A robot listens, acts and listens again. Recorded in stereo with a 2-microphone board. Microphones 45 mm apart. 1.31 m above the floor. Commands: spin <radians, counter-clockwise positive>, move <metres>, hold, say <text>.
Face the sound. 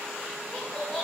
spin 0.52
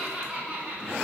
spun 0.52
spin -0.61
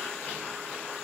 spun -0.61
hold
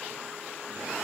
hold
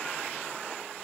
say I heard laughter from this way, but can't make it out now.